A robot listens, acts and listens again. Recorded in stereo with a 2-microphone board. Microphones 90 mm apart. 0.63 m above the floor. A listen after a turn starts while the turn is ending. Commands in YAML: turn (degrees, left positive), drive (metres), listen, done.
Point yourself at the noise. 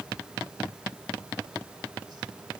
listen: true
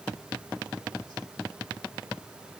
listen: true
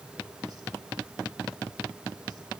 done: "I can't make out anything."